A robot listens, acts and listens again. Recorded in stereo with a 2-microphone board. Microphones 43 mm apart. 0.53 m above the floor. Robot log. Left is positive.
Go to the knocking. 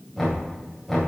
cmd yaw +30
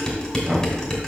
note: So it is at 30° right.
cmd yaw -30
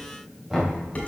note: The knocking is now 10° right.
cmd yaw -10
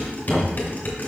cmd fwd 1.0
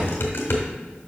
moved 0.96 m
cmd idle
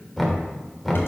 cmd fwd 1.0
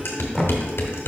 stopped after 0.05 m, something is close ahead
end: Arrived at the knocking, straight ahead.